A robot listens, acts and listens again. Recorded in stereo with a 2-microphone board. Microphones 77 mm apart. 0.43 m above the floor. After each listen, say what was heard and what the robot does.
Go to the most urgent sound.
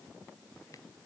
Keep listening.
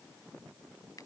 Keep listening.
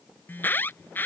The alarm: about 25° left or 155° left. Turn 25° left.
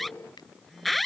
Drive 1.0 m forward.
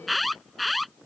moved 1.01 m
Drive 1.0 m forward.
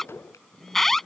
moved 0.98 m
Drive 1.0 m forward.
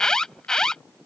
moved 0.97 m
The alarm is now 10° left. Turn 10° left.
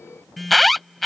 Drive 1.0 m forward.
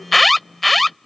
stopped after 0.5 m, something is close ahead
I am next to the alarm.